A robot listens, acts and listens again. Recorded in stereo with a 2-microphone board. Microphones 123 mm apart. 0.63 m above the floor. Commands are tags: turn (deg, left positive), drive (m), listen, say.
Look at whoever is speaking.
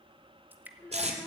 <turn deg="25"/>
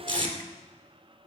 <listen/>
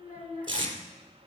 <turn deg="120"/>
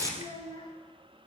<turn deg="40"/>
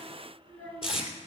<turn deg="10"/>
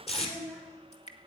<say>Found it: a child speaking, straight ahead, over 4 m away.</say>